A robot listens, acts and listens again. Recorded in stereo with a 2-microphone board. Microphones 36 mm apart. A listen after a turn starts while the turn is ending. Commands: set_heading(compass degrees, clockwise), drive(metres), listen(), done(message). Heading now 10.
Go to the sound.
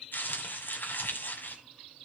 set_heading(300)
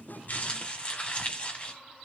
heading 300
set_heading(260)
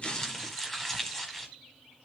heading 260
set_heading(250)
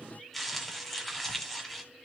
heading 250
drive(1.0)
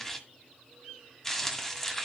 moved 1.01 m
set_heading(235)
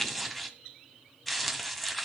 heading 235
drive(1.0)
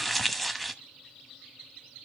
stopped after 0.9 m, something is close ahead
done("Arrived at the crumpling, straight ahead.")